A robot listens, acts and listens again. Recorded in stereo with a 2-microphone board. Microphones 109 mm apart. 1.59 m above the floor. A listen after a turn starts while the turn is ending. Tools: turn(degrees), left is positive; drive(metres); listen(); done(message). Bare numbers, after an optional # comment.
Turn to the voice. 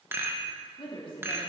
# The woman speaking: about 50° left or 130° left.
turn(50)
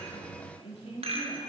# So it is at 70° left.
turn(70)
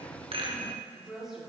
done("Found it: a woman speaking, straight ahead, 2 to 4 m away.")